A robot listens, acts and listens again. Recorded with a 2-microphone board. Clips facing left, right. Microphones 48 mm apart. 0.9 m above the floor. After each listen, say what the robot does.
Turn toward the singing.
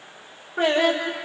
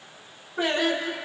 Turn 55° left.
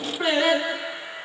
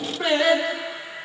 Turn 20° left.
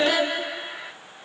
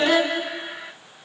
Turn 15° left.
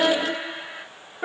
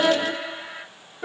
Turn 30° left.
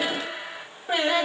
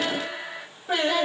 Turn 20° left.
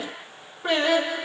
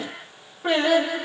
Facing the singing.